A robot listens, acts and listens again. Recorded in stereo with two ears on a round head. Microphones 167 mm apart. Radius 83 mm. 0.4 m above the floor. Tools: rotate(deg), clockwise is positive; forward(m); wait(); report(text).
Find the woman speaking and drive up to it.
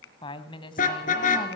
rotate(-25)
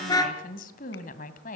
rotate(-125)
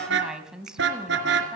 forward(1.0)
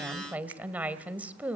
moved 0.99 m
rotate(10)
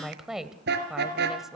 forward(1.0)
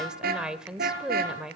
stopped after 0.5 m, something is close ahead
report("I am next to the woman speaking.")